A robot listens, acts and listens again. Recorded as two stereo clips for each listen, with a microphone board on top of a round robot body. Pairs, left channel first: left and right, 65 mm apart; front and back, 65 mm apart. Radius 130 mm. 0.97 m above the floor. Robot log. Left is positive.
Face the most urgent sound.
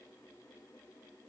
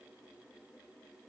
cmd idle
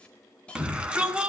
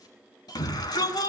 note: The shout: 15° right.
cmd yaw -15
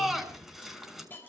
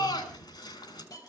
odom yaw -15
end: Facing the shout, over 4 m away.